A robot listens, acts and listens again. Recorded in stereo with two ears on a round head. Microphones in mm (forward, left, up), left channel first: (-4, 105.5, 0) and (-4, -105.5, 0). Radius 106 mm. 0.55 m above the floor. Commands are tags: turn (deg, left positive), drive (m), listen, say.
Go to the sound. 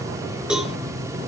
<turn deg="-30"/>
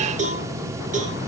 <turn deg="-145"/>
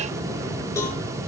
<turn deg="15"/>
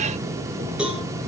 <drive m="1.0"/>
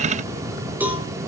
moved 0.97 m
<drive m="1.0"/>
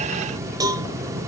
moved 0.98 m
<turn deg="-15"/>
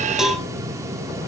<drive m="1.0"/>
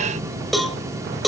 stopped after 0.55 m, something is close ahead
<say>I am next to the cowbell.</say>